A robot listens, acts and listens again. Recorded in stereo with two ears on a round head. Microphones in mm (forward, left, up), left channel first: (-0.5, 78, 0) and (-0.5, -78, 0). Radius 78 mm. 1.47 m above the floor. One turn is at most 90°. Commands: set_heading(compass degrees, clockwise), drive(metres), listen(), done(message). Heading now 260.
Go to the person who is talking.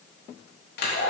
listen()
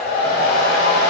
listen()
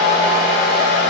done("I can't make out anyone speaking to turn to.")